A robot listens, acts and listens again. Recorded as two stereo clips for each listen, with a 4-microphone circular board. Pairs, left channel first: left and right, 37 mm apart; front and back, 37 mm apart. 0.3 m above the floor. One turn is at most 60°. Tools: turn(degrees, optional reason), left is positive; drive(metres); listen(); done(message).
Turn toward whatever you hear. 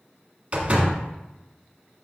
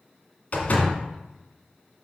turn(degrees=-40, reason="The door slam: 40° right.")
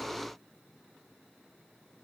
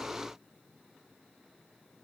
done("I heard a door slam from this way, but can't make it out now.")